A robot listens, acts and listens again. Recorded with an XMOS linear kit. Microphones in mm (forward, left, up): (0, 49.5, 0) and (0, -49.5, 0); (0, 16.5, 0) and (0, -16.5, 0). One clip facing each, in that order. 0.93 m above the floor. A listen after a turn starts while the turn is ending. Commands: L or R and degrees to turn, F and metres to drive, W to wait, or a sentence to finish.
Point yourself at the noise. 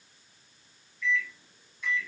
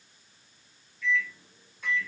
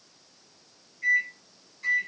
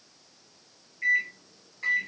R55
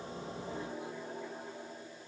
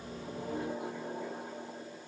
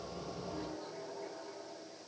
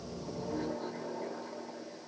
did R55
R65
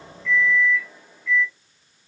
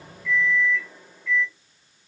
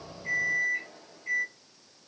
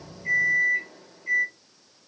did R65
Found it: a microwave, straight ahead, under 1 m away.